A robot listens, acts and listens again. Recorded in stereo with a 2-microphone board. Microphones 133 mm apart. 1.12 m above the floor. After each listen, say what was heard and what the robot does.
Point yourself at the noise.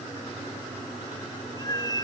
The cat meowing: about 30° left or 150° left. Turn 30° left.
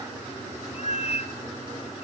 So it is at 115° left. Turn 115° left.
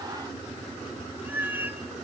The cat meowing is now 15° right. Turn 15° right.
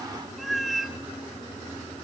Found it: a cat meowing, straight ahead, 1 to 2 m away.